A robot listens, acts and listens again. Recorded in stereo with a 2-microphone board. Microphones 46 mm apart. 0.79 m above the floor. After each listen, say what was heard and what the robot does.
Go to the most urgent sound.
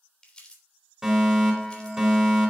Turn 30° right.
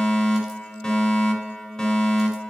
So it is at 15° left. Turn 15° left.
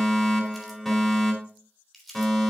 Drive 1.0 m forward.
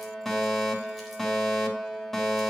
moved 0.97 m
The fire alarm is now 10° left. Turn 10° left.
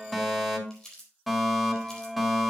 Drive 1.0 m forward.
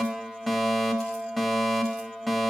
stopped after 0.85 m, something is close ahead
I am next to the fire alarm.